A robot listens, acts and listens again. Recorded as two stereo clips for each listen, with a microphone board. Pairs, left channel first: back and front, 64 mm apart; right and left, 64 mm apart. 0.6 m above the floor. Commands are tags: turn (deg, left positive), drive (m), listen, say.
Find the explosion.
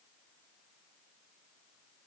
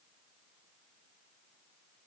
<listen/>
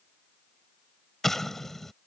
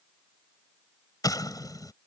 <turn deg="-95"/>
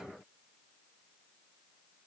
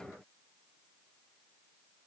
<say>Facing where the explosion came from. I can't hear it now.</say>